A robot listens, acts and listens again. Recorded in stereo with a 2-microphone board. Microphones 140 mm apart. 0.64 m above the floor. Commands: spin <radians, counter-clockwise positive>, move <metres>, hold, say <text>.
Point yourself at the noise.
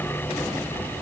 hold
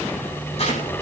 spin 0.96
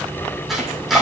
say Facing the chopping.